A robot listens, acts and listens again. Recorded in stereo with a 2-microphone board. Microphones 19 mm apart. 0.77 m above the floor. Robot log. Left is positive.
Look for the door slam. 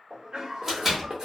note: The door slam: about 20° right or 160° right.
cmd yaw -20
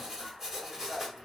cmd idle
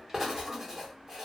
end: I heard a door slam, but can't make it out now. It was about straight ahead or 140° right.